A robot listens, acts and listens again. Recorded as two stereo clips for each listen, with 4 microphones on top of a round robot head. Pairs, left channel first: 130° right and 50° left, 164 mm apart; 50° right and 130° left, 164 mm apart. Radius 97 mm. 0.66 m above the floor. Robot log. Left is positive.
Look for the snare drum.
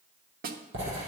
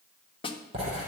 note: The snare drum: 10° left.
cmd yaw +10
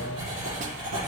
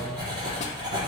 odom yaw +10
cmd idle
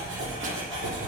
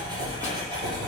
cmd idle
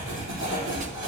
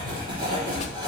end: Facing where the snare drum came from. I can't hear it now.